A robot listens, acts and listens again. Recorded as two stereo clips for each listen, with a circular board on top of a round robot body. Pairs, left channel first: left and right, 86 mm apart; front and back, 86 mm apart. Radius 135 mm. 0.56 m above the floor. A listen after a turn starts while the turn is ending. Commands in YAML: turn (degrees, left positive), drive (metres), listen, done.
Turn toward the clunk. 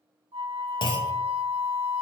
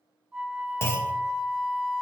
turn: 60
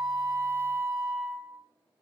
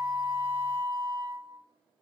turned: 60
done: "I heard a clunk from this way, but can't make it out now."